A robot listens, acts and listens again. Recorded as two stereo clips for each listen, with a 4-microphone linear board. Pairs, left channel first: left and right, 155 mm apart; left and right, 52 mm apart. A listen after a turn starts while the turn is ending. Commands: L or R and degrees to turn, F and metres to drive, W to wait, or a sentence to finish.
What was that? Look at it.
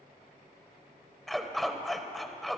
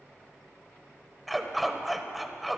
L30
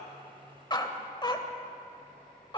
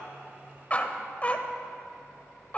L150
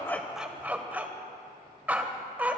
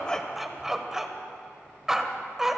R10
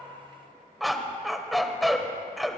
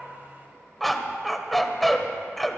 Found it: a dog barking, straight ahead.